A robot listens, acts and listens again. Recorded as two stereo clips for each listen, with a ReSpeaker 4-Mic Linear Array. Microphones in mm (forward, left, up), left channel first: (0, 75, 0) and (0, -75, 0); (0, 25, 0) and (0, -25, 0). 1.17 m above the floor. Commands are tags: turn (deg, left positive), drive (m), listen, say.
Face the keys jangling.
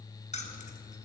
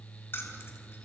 <turn deg="50"/>
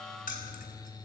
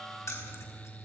<turn deg="70"/>
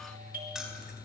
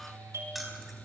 <say>Found it: keys jangling, straight ahead, over 4 m away.</say>